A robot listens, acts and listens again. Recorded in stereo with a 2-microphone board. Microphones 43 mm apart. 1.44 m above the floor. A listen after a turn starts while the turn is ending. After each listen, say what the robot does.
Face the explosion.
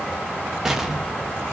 Turn 30° right.
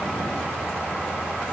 Keep listening.
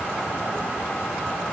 I heard an explosion, but can't make it out now. It was about 20° left or 140° right.